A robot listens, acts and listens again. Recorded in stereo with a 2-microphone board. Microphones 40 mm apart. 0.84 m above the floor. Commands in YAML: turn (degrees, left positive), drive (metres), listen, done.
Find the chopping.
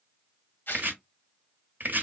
turn: -55
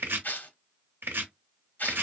turn: -70
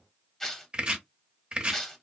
turn: -25
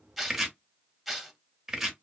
turn: -10
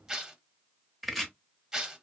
done: "Facing the chopping, under 1 m away."